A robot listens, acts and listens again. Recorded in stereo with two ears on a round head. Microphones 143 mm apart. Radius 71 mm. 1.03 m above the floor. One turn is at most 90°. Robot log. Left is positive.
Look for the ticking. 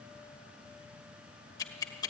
note: The ticking: about 25° left or 155° left.
cmd yaw +25
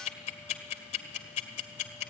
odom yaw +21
note: So it is at 135° left.
cmd yaw +90
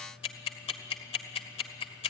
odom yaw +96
note: The ticking is now 35° left.
cmd yaw +35
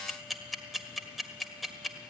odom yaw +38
end: Found it: ticking, straight ahead.